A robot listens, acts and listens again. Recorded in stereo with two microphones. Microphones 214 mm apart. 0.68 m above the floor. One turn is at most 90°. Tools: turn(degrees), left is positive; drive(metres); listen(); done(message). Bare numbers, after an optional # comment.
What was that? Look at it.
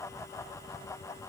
listen()
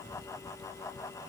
listen()
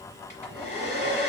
# The hair dryer: about 35° left or 145° left.
turn(35)
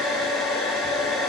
done("Facing the hair dryer, 1 to 2 m away.")